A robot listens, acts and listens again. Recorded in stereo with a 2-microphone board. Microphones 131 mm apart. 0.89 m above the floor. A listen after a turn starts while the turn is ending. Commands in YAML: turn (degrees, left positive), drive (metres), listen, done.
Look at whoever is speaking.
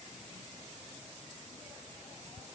listen: true
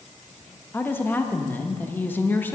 turn: 15
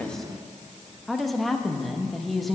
done: "Facing the woman speaking, under 1 m away."